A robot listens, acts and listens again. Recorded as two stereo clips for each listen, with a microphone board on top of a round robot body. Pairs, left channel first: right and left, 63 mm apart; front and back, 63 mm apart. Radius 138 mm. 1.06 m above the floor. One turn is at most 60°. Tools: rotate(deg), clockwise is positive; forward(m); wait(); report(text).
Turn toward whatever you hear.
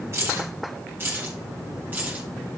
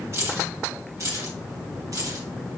rotate(-60)
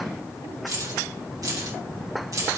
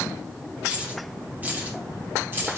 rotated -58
rotate(-60)
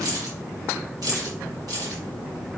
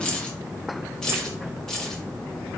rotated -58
rotate(-60)
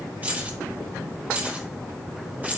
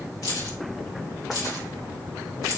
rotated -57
rotate(-25)
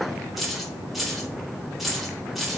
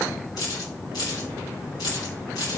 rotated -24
report("Facing the keys jangling.")